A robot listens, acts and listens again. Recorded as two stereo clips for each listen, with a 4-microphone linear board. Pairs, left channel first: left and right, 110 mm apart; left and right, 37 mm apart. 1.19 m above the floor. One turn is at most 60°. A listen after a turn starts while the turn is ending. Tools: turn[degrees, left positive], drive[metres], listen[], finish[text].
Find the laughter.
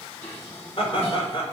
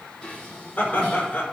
Thought: The laughter: about 50° left or 130° left.
Action: turn[50]
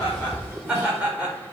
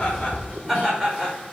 Thought: So it is at 10° right.
Action: turn[-10]
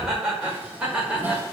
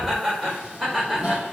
Thought: The laughter is now 10° right.
Action: turn[-10]
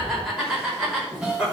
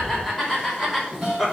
Action: finish[Found it: laughter, straight ahead.]